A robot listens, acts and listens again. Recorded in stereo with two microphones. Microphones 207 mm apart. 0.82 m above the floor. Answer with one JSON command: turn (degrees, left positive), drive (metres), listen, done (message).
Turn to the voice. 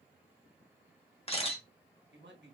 {"turn": -60}
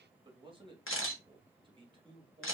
{"turn": -30}
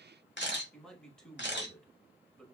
{"done": "Facing the man speaking, 1 to 2 m away."}